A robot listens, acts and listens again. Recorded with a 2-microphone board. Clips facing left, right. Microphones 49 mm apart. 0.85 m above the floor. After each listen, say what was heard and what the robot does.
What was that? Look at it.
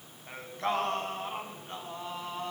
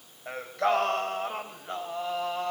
Turn 90° right.
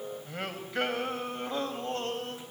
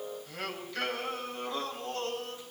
So it is at 30° left. Turn 30° left.
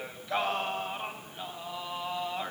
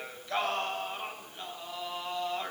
The singing is now 10° left. Turn 10° left.
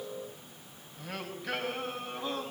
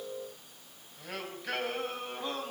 Found it: singing, straight ahead, over 4 m away.